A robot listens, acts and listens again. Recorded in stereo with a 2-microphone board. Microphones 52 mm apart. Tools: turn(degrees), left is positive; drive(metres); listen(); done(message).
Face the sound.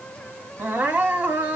turn(degrees=-30)
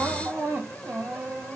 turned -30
turn(degrees=-115)
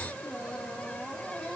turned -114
done("Found it: crying, straight ahead, 1 to 2 m away.")